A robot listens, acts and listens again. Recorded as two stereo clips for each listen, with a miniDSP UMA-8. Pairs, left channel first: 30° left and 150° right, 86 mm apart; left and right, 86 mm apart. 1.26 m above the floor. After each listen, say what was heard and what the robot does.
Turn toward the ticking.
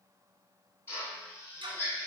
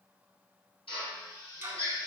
The ticking: 155° right. Turn 155° right.
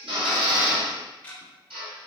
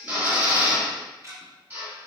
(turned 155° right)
The ticking is now 45° right. Turn 45° right.
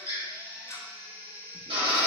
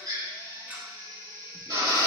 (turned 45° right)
The ticking is now 20° right. Turn 20° right.
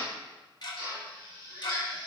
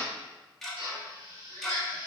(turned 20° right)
Found it: ticking, straight ahead, under 1 m away.